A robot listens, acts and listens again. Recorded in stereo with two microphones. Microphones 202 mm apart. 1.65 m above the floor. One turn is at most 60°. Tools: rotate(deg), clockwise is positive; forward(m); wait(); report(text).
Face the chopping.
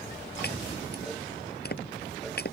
rotate(-50)
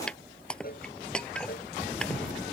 report("Facing the chopping.")